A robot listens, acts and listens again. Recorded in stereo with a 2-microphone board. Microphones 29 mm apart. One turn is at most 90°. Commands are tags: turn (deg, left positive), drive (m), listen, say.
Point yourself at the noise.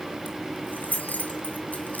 <turn deg="75"/>
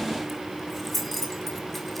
<say>Facing the keys jangling, 2 to 4 m away.</say>